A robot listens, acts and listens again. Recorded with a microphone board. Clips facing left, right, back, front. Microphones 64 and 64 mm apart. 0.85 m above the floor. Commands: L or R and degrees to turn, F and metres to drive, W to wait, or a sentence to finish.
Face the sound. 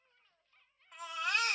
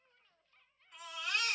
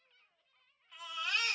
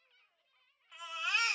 L70
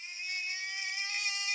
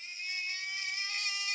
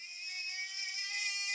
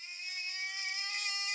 L20
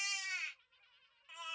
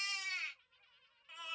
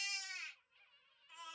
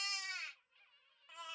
L10
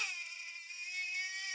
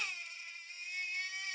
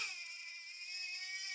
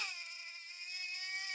Found it: a baby crying, straight ahead, 1 to 2 m away.